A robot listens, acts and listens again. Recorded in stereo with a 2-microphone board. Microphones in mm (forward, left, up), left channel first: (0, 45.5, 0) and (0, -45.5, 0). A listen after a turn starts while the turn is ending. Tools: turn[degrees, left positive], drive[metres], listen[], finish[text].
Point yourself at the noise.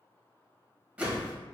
Action: turn[-30]
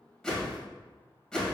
Thought: So it is at 10° left.
Action: turn[10]
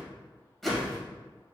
Action: finish[Found it: a whoosh, straight ahead, 1 to 2 m away.]